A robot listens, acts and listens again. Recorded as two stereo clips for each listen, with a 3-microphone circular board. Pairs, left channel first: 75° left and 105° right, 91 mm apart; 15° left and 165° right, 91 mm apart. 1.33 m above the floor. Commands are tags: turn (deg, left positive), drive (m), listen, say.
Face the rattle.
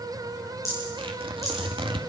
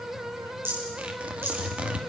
<turn deg="130"/>
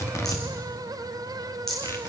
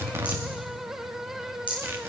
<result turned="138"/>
<turn deg="-10"/>
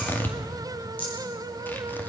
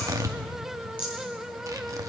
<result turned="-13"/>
<say>Facing the rattle.</say>